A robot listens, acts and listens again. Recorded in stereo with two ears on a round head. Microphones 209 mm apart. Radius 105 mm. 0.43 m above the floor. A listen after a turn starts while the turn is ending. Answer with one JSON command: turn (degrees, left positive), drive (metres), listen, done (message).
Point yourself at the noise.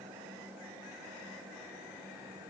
{"listen": true}
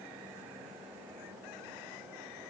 {"listen": true}
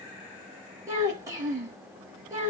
{"turn": -30}
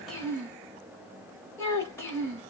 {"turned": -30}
{"turn": 10}
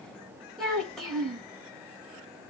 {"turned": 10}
{"done": "Found it: a child speaking, straight ahead, 1 to 2 m away."}